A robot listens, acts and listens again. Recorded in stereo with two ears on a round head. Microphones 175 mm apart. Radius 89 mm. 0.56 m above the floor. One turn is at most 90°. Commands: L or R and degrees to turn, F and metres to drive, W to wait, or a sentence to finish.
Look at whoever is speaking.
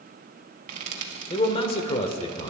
L30
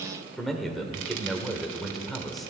Facing the man speaking, 1 to 2 m away.